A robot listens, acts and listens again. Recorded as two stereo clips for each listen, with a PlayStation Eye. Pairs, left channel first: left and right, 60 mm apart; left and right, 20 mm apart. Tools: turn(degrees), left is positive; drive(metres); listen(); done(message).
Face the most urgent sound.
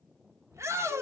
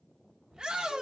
turn(degrees=-50)
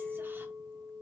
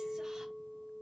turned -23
listen()
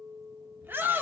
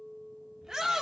turn(degrees=-40)
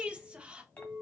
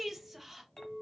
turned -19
turn(degrees=-20)
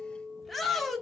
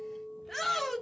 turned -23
done("Found it: a shout, straight ahead.")